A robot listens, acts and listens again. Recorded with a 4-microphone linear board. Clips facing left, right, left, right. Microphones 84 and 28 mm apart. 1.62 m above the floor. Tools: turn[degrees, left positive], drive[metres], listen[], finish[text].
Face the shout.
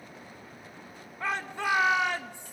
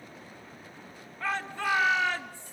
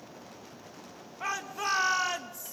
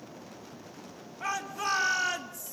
Thought: The shout: about 20° left or 160° left.
Action: turn[20]
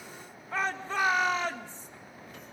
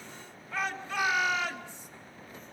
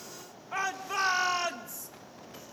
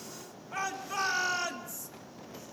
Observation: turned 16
Thought: So it is at 145° left.
Action: turn[145]
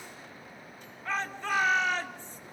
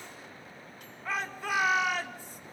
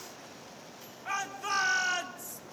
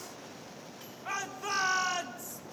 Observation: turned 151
Action: finish[Facing the shout, 2 to 4 m away.]